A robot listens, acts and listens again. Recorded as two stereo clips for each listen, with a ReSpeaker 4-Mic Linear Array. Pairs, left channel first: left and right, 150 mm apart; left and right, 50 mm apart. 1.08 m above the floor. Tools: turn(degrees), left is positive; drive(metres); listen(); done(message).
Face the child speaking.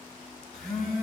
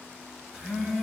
listen()
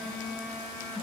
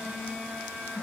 listen()
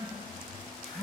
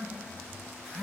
done("I can't make out a child speaking, only a phone buzzing.")